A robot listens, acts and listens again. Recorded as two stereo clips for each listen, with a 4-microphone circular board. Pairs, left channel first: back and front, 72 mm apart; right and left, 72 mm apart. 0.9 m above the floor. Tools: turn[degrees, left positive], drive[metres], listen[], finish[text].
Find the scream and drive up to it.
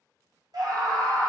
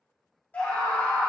Thought: The scream: 25° right.
Action: turn[-25]
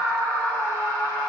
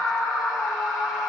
Thought: The scream is now 10° left.
Action: turn[10]
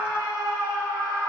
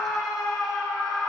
Action: drive[1.0]
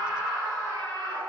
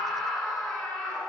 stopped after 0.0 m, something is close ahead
Action: finish[Blocked. The scream is further on, straight ahead.]